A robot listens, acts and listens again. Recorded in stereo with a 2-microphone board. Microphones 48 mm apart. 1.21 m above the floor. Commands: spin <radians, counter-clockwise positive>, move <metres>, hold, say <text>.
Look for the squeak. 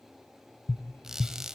spin -0.52
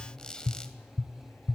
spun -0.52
spin 0.35
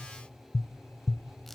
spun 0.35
say Found it: a squeak, straight ahead.